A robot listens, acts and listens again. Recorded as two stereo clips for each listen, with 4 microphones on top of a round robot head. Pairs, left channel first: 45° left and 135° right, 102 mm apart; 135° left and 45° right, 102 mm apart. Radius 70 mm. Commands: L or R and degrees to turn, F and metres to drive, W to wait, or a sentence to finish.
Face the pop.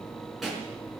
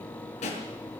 L135
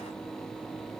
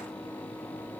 Facing where the pop came from. I can't hear it now.